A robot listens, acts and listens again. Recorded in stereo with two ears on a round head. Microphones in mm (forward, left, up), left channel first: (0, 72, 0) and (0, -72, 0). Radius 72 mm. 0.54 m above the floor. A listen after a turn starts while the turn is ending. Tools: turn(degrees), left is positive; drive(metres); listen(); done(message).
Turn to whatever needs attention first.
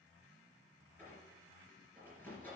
listen()
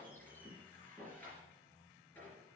listen()
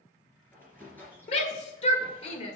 turn(degrees=40)
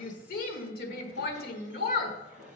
turn(degrees=95)
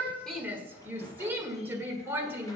turn(degrees=-15)
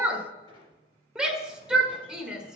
done("Facing the shout.")